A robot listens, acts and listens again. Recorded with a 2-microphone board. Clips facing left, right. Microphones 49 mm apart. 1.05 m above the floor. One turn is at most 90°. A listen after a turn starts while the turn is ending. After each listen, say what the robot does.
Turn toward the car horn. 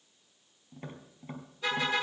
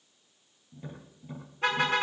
Turn 50° right.
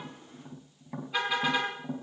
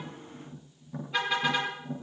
Facing the car horn.